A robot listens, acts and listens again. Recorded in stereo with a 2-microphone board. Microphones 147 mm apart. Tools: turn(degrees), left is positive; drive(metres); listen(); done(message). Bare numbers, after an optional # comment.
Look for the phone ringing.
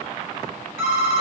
# The phone ringing: about 55° left or 125° left.
turn(55)
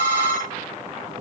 # So it is at 65° left.
turn(65)
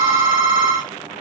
done("Facing the phone ringing, 2 to 4 m away.")